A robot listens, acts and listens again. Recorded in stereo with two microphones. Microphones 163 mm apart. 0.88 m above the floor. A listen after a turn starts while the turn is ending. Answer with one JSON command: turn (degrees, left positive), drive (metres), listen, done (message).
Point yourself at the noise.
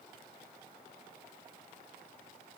{"listen": true}
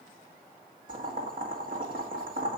{"turn": -60}
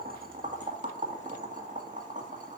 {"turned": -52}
{"turn": -60}
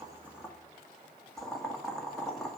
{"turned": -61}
{"done": "Facing the boiling, 1 to 2 m away."}